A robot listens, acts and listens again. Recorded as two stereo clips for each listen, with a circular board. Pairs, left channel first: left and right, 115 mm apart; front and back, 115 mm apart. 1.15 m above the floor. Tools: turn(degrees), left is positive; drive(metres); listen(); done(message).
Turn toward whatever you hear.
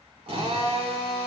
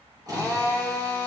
turn(degrees=-125)
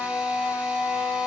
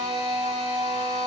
turn(degrees=-15)
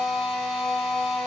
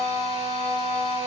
done("Facing the drill, 2 to 4 m away.")